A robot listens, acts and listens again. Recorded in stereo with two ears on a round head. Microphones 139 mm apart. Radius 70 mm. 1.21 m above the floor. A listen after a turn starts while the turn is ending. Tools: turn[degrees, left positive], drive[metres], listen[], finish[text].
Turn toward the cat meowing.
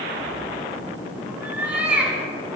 Action: turn[-30]
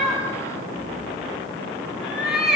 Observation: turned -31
Action: turn[-30]
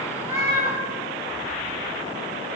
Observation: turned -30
Thought: So it is at 155° right.
Action: turn[-155]
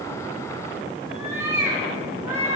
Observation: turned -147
Thought: The cat meowing is now 20° right.
Action: turn[-20]
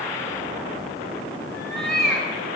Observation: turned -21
Action: finish[Facing the cat meowing.]